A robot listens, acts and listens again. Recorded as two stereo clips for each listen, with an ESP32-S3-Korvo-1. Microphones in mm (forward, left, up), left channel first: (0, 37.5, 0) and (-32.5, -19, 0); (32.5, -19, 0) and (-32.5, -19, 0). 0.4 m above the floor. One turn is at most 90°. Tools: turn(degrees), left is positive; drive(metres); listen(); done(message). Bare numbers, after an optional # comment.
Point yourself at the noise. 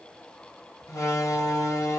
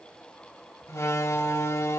# The door slam: 35° left.
turn(35)
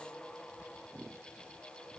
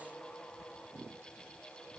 done("I heard a door slam from this way, but can't make it out now.")